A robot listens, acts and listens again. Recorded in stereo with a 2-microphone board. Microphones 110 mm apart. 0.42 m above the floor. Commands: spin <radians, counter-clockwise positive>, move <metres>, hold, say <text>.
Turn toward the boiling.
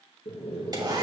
spin 1.57
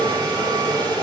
spin 0.26
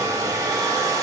hold
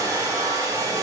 hold
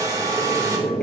say Facing the boiling, 2 to 4 m away.